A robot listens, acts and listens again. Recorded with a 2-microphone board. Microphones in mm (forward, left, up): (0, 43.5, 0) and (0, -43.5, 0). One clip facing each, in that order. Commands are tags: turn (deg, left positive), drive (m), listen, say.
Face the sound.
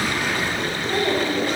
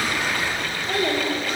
<turn deg="-90"/>
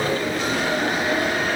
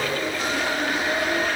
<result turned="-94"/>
<listen/>
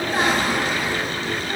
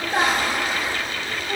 <turn deg="-30"/>
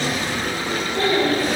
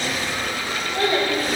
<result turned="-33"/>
<turn deg="-15"/>
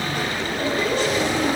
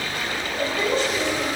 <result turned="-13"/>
<say>Facing the child speaking.</say>